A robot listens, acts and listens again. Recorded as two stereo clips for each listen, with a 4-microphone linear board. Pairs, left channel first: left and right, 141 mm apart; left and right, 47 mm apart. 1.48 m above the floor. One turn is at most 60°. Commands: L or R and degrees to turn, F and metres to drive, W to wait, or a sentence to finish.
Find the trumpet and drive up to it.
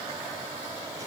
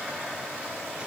W
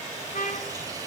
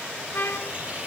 L60
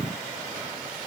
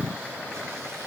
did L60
L30
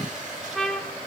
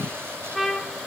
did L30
F1.0
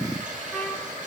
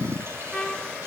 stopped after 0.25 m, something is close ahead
Blocked. The trumpet is further on, straight ahead.